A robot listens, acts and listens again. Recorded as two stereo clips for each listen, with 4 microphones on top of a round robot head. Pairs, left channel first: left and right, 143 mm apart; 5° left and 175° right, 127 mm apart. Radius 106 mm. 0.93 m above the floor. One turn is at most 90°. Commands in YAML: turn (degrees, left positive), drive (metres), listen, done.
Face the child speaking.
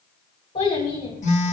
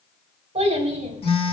turn: 90
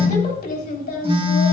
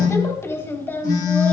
turn: 80
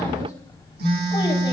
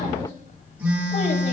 listen: true
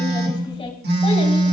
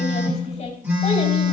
turn: 40
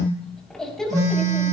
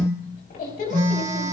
done: "Facing the child speaking, 2 to 4 m away."